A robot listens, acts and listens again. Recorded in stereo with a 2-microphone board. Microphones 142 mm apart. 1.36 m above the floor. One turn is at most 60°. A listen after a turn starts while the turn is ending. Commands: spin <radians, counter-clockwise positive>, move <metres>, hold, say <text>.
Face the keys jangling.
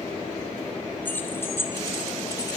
spin 0.35
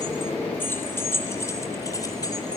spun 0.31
spin 0.44
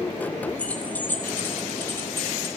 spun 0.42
spin 0.35
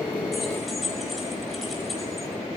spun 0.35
say Facing the keys jangling.